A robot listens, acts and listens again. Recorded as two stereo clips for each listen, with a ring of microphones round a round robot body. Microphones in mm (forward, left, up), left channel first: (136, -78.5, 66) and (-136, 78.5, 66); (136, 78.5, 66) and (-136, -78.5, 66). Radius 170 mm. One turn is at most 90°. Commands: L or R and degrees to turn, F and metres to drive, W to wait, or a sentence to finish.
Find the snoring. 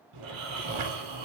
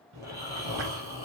L90
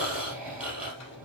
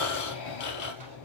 L65
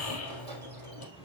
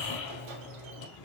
L15
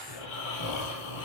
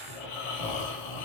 Facing the snoring, 2 to 4 m away.